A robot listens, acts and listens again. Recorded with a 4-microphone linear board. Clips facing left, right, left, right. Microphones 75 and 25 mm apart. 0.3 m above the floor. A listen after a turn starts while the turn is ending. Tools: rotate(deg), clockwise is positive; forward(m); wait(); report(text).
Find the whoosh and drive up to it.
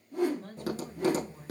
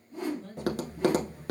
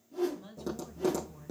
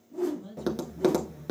rotate(-70)
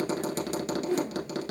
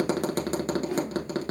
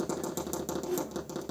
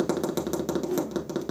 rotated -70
rotate(-35)
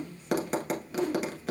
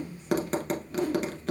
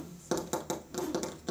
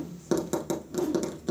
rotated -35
forward(1.0)
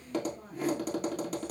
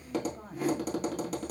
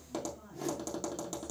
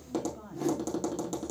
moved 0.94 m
forward(1.0)
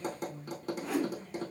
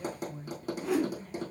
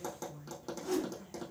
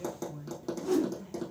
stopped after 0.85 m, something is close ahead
report("I am next to the whoosh.")